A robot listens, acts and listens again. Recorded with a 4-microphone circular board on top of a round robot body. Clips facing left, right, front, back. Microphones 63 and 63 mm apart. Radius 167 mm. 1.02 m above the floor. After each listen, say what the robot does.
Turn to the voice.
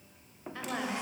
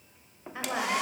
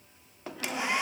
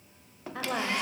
Turn 160° right.
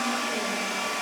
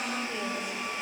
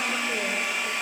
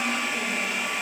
Keep listening.
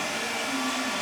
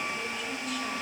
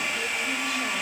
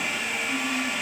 Keep listening.
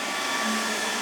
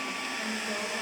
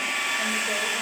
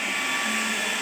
I heard a woman speaking from this way, but can't make it out now.